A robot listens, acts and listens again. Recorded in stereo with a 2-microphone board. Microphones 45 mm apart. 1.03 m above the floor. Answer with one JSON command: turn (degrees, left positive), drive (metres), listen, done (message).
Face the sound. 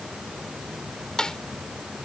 {"turn": 15}
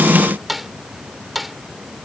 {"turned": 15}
{"done": "Facing the snare drum."}